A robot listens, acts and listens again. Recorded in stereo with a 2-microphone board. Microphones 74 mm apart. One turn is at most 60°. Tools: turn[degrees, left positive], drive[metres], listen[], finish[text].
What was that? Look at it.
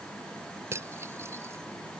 Thought: The cutlery clinking: about 40° right or 140° right.
Action: turn[-40]
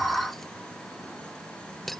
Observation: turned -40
Action: finish[Facing the cutlery clinking.]